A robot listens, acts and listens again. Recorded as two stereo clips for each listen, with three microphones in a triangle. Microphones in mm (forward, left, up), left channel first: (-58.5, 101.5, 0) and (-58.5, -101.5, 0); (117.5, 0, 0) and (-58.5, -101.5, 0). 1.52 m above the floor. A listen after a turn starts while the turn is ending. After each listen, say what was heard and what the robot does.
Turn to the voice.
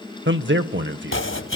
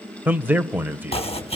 The man speaking: 70° right. Turn 70° right.
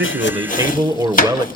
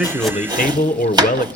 The man speaking is now 15° right. Turn 15° right.
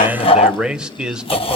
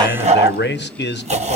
Found it: a man speaking, straight ahead.